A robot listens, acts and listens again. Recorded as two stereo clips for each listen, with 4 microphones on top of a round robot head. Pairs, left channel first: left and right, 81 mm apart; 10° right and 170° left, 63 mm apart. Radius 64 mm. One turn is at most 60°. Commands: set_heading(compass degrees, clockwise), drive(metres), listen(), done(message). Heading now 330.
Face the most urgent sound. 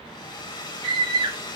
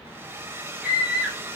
set_heading(30)
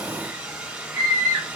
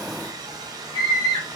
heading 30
set_heading(55)
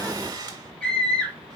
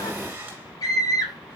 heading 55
set_heading(40)
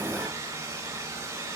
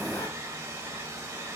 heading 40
listen()
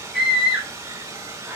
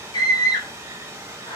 done("Found it: a scream, straight ahead.")